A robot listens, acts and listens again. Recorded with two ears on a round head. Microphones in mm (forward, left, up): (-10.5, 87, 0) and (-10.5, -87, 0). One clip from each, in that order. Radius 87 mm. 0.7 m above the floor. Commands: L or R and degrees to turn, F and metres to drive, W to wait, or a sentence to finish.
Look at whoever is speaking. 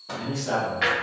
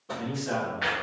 L30
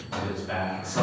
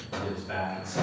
L140
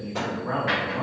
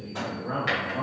Facing the man speaking.